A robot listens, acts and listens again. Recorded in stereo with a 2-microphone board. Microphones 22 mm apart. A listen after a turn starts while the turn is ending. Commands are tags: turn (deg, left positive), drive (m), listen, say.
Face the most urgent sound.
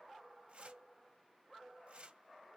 <listen/>
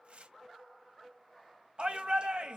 <turn deg="-55"/>
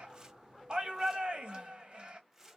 <turn deg="-55"/>
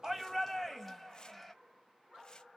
<say>Found it: a shout, straight ahead.</say>